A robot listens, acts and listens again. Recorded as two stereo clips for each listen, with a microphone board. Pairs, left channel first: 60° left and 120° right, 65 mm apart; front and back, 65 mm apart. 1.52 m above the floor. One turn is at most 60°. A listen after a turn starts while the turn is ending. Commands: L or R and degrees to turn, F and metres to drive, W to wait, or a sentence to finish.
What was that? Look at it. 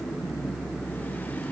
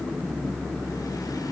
W
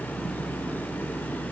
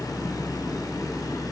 W
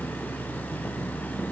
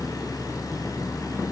I can't make out anything to turn to.